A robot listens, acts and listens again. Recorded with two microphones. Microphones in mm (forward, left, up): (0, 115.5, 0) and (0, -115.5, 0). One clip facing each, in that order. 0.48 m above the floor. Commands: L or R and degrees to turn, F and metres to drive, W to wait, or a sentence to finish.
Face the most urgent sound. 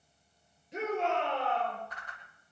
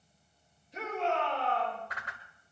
L70
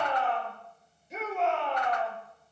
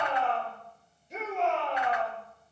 Found it: a shout, straight ahead, over 4 m away.